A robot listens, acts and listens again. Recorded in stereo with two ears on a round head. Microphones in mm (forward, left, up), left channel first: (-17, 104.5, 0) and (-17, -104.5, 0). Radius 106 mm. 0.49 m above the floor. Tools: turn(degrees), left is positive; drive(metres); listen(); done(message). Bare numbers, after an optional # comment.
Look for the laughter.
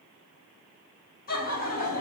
# The laughter: about 40° left or 140° left.
turn(40)
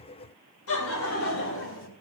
# So it is at 120° left.
turn(120)
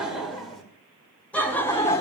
# The laughter is now 15° left.
turn(15)
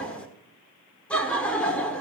done("Facing the laughter.")